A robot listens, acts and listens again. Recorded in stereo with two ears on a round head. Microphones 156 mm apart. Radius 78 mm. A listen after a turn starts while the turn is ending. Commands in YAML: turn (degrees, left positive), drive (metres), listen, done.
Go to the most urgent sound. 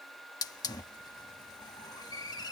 listen: true
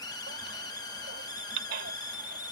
turn: -70
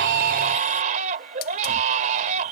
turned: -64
turn: -45
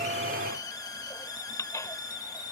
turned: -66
turn: 20
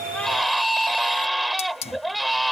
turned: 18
drive: 1.0
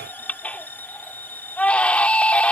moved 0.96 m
turn: 10
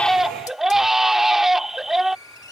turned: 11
drive: 1.0
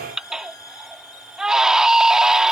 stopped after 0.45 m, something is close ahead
done: "Arrived at the baby crying, straight ahead."